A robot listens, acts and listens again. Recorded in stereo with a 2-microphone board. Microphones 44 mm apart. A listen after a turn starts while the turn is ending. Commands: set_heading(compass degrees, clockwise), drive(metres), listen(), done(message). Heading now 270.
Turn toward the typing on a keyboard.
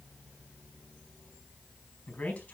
listen()
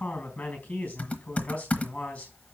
set_heading(240)
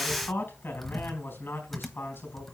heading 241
done("Facing the typing on a keyboard.")